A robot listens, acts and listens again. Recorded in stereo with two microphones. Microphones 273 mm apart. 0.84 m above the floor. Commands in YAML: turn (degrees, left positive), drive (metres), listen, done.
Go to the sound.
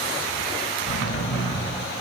turn: 50
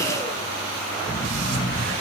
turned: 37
turn: 10
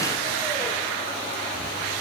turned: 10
listen: true
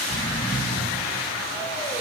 drive: 1.0
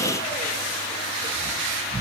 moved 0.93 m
drive: 1.0
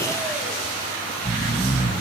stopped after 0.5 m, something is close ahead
turn: -10
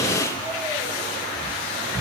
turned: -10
done: "I am next to the snoring."